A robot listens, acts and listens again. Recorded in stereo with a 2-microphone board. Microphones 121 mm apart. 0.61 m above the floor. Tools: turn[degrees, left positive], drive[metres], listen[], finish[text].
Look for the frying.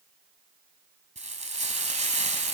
Thought: The frying: about 75° right or 105° right.
Action: turn[-75]
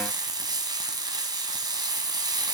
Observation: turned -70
Thought: So it is at 35° right.
Action: turn[-35]
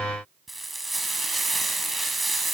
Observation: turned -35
Action: finish[Facing the frying, 1 to 2 m away.]